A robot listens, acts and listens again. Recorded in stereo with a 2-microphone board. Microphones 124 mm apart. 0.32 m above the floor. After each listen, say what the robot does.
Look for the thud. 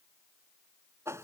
Keep listening.
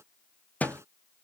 Turn 30° left.
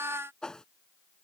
Keep listening.
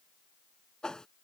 I heard a thud, but can't make it out now. It was about 15° right or 135° left.